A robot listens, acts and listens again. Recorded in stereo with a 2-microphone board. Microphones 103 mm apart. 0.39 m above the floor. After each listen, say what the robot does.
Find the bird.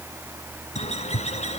Turn 90° left.
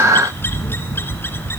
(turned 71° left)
Turn 20° left.
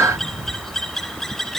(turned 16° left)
Facing the bird, 1 to 2 m away.